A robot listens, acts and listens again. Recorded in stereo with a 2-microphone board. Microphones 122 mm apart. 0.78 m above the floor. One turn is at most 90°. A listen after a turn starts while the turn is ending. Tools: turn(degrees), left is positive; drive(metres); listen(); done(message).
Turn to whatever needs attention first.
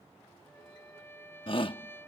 turn(degrees=45)
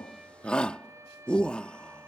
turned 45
turn(degrees=10)
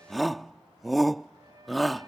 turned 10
done("Facing the shout.")